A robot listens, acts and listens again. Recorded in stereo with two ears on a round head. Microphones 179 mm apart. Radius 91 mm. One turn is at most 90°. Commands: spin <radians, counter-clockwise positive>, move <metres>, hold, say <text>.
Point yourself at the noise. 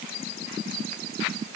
hold
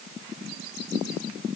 hold
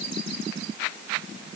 say I can't make out anything to turn to.